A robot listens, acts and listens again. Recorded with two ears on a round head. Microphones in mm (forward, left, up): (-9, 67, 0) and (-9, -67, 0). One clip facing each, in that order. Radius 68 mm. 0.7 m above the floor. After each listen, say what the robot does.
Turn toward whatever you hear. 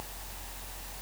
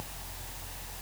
Keep listening.
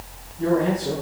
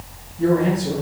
Turn 30° right.
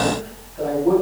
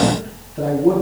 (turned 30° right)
Turn 135° right.
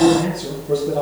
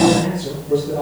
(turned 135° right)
Turn 35° left.
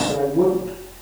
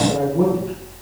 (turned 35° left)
Found it: a man speaking, straight ahead, 2 to 4 m away.